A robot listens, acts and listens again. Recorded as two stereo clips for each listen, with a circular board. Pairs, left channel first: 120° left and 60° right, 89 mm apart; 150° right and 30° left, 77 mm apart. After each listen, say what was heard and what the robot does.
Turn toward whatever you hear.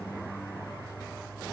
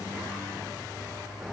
Keep listening.
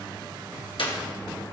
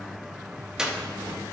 The clap: 110° left. Turn 110° left.
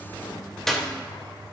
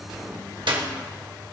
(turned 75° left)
The clap is now 35° left. Turn 35° left.
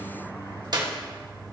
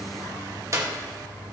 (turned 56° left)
The clap is now 20° right. Turn 20° right.
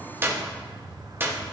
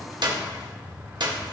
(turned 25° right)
Facing the clap, 1 to 2 m away.